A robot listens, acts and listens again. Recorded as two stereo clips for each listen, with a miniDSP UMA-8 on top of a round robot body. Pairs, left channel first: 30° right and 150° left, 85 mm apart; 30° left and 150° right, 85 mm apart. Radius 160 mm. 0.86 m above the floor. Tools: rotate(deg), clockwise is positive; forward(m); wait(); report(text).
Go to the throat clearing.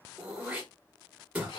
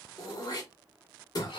rotate(-75)
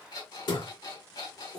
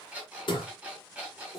forward(1.0)
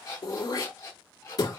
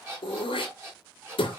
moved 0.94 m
rotate(-15)
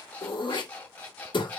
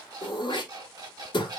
forward(1.0)
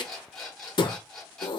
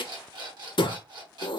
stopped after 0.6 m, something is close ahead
report("I am next to the throat clearing.")